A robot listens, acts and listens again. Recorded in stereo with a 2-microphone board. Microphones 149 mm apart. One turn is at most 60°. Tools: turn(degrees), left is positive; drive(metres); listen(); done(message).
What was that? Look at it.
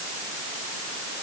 listen()
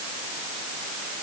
listen()
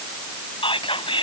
turn(degrees=40)
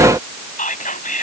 turn(degrees=60)
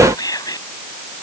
turn(degrees=30)
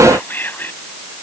turn(degrees=15)
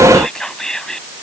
done("Found it: whispering, straight ahead.")